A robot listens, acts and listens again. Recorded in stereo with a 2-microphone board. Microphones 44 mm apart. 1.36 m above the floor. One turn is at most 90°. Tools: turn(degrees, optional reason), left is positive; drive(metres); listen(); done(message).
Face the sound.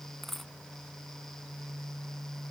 turn(degrees=30)
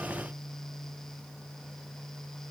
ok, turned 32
listen()
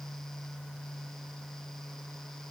done("I heard a dropped coin, but can't make it out now. It was about 30° right or 145° left.")